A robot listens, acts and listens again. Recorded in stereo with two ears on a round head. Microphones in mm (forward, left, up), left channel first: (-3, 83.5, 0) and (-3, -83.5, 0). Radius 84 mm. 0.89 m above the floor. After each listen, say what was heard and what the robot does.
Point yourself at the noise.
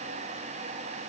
Keep listening.
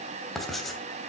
Turn 30° left.
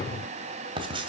So it is at 30° right. Turn 30° right.
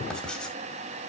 Facing the writing.